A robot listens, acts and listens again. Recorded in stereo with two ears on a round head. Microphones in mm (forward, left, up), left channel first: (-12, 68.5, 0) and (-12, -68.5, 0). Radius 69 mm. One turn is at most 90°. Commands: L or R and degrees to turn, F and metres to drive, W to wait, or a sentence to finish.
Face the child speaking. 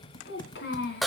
L90
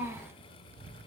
R10
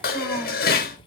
W
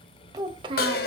R30
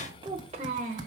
R50
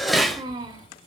R20
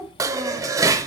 Found it: a child speaking, straight ahead.